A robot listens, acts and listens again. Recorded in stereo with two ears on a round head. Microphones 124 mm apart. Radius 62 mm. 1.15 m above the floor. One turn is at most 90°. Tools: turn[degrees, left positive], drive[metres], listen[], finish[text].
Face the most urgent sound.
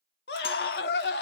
Action: turn[90]
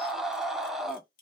Action: finish[Facing the scream.]